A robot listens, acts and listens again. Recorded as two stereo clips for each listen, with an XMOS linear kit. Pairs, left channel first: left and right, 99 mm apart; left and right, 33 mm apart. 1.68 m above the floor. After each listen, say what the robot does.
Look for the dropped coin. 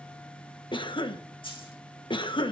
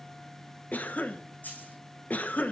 Turn 60° left.
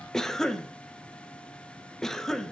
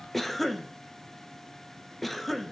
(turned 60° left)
Keep listening.
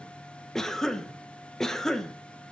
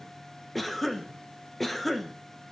I heard a dropped coin, but can't make it out now. It was about straight ahead or 60° left.